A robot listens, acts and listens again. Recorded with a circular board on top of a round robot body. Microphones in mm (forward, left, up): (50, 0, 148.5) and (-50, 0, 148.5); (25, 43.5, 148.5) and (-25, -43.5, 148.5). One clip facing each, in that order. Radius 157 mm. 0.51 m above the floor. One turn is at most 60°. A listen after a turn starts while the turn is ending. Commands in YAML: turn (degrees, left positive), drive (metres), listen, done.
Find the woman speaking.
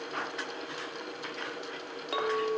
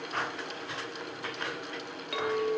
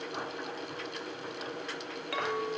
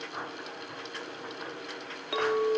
listen: true
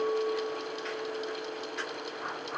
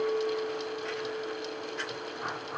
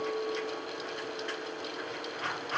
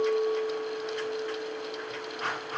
listen: true
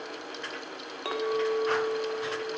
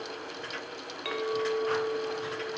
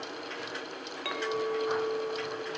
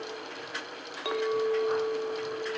done: "I can't make out a woman speaking, only a clink."